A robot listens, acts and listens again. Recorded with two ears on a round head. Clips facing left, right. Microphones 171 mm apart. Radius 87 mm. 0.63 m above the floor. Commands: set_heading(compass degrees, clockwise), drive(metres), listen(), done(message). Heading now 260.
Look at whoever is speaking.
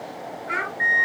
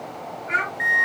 set_heading(230)
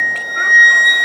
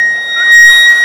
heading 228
listen()
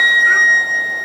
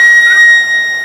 listen()
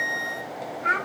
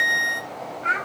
set_heading(248)
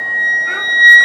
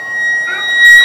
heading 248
listen()
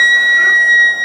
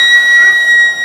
listen()
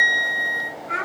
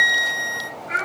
done("Found it: a child speaking, straight ahead.")